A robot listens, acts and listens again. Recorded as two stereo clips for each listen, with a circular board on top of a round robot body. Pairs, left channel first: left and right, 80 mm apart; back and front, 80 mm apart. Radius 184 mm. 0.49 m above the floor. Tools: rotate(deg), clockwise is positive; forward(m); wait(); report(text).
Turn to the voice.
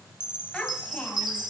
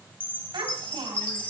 rotate(-10)
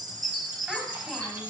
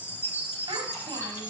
wait()
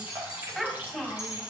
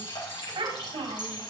report("Facing the child speaking, 2 to 4 m away.")